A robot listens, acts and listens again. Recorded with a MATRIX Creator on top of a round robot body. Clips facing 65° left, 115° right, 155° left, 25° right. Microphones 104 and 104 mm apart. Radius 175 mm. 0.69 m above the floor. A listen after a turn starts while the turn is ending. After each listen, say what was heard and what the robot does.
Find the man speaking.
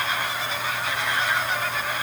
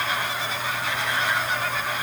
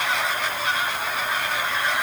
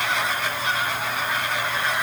Keep listening.
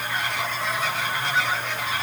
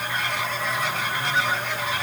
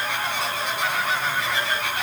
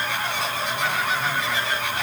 Keep listening.
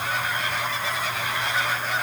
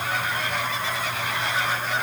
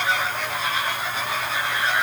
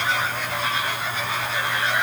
I can't make out a man speaking to turn to.